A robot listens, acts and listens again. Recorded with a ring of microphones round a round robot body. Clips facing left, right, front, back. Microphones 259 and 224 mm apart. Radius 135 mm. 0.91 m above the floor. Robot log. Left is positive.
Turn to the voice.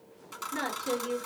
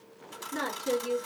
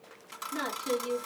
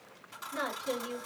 note: The woman speaking: 20° right.
cmd yaw -20
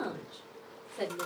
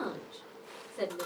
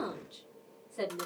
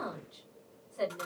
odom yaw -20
note: The woman speaking is now 10° right.
cmd yaw -10
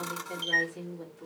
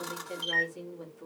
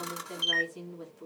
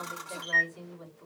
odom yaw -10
end: Found it: a woman speaking, straight ahead.